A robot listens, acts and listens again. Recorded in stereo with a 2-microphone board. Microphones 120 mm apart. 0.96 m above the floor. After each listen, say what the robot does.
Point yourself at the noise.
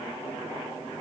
Keep listening.
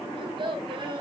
Turn 40° right.
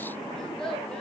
Found it: a child speaking, straight ahead, over 4 m away.